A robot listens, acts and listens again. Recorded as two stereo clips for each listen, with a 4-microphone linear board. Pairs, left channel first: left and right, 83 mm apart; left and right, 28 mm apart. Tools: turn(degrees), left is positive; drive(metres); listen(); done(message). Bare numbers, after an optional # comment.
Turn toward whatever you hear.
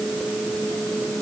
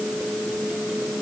listen()
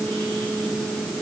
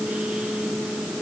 listen()
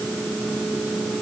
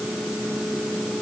done("I can't make out anything to turn to.")